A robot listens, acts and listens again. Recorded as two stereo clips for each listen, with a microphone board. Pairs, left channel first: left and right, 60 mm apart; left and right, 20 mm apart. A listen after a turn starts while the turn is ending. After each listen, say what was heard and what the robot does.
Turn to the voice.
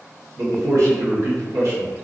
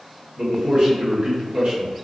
The man speaking: about 55° right or 125° right. Turn 55° right.
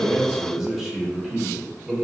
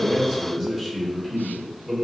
So it is at 10° right. Turn 10° right.
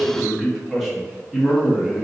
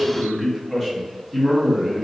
Facing the man speaking.